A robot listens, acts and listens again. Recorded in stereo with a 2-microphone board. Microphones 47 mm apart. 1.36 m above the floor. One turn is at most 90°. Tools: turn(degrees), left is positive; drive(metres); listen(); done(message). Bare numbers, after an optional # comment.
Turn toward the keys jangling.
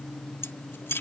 # The keys jangling: about 65° left or 115° left.
turn(65)
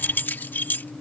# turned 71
# So it is at 50° left.
turn(50)
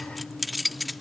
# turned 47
done("Facing the keys jangling.")